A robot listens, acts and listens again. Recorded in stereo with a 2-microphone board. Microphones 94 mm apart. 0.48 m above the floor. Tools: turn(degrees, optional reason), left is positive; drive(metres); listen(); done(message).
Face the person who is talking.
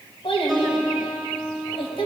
turn(degrees=75, reason="The child speaking: about 75° left or 105° left.")
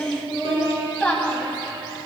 turn(degrees=15, reason="So it is at 15° left.")
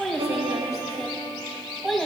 done("Found it: a child speaking, straight ahead, 2 to 4 m away.")